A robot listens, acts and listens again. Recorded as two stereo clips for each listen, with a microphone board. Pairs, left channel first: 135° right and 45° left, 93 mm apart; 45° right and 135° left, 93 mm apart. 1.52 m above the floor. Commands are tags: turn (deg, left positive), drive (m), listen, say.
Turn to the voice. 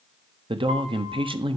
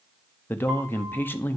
<turn deg="20"/>
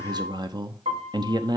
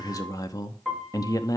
<say>Facing the man speaking.</say>